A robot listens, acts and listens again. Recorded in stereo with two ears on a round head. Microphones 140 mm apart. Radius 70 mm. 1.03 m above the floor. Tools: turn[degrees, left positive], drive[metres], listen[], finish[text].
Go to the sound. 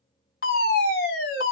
Thought: The fire alarm: about 60° left or 120° left.
Action: turn[60]
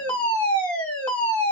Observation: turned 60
Thought: So it is at 10° left.
Action: turn[10]
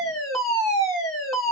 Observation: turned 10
Action: drive[1.0]
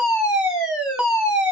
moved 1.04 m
Action: drive[1.0]
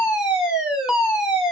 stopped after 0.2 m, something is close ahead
Action: finish[Arrived at the fire alarm, straight ahead.]